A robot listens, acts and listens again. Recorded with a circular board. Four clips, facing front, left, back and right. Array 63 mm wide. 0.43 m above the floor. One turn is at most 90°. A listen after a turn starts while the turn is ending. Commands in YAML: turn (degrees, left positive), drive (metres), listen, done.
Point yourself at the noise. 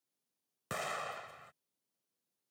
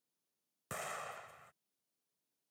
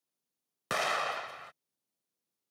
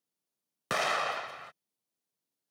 turn: -90
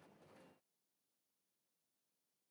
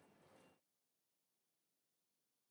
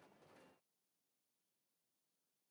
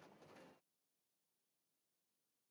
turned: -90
turn: -35
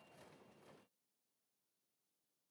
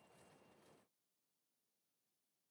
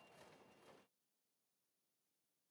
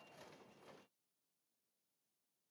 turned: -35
done: "I heard an explosion from this way, but can't make it out now."